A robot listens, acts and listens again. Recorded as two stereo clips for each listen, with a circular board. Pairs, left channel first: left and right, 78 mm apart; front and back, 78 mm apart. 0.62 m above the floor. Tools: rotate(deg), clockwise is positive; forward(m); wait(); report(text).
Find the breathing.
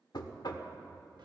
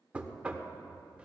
wait()
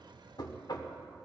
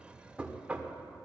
wait()
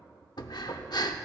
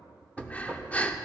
rotate(-70)
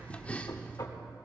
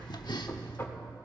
rotate(-20)
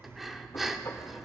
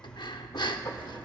report("Facing the breathing, under 1 m away.")